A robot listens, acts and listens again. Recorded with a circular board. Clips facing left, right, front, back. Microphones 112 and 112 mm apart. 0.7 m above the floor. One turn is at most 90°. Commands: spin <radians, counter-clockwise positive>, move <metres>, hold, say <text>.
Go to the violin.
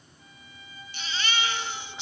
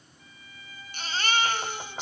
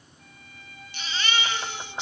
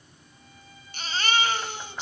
spin 0.35
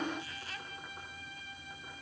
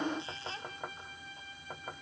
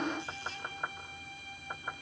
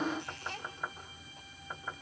move 1.0
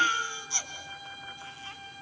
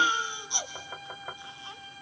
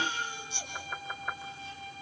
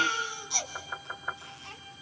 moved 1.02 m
move 1.0
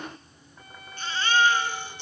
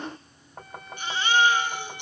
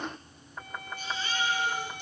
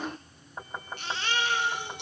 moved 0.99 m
move 1.0
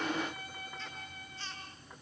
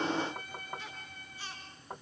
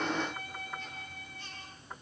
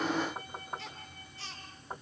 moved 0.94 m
move 1.0
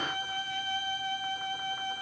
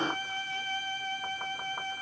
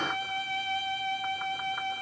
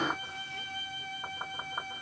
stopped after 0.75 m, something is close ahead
spin 0.26
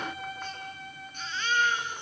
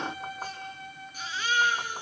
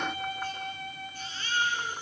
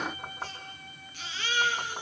say Arrived at the violin, straight ahead.